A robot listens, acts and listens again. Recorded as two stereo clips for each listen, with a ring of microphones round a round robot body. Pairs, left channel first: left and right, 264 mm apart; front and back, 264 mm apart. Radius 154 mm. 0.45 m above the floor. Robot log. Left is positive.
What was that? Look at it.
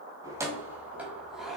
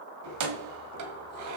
note: The keys jangling: straight behind.
cmd yaw +180
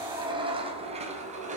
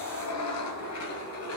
note: The keys jangling is now 25° right.
cmd yaw -25
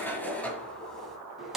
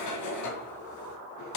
end: Found it: keys jangling, straight ahead.